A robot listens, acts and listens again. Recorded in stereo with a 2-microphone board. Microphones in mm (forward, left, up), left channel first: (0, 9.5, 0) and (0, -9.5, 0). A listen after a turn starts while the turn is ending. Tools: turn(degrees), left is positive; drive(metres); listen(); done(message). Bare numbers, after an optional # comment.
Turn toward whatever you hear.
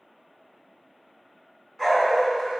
# The dog barking: about 20° left or 160° left.
turn(20)
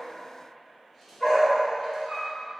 # The dog barking: about 20° left or 160° left.
turn(20)
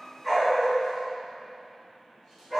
turn(30)
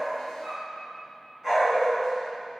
# So it is at 15° right.
turn(-15)
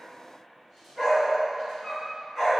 done("Facing the dog barking, 2 to 4 m away.")